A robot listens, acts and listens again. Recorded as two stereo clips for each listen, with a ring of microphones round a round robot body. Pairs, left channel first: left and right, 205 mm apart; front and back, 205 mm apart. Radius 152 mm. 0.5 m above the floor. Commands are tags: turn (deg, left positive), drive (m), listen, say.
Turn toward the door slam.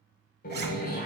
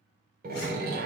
<turn deg="140"/>
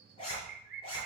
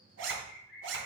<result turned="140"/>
<say>I heard a door slam from this way, but can't make it out now.</say>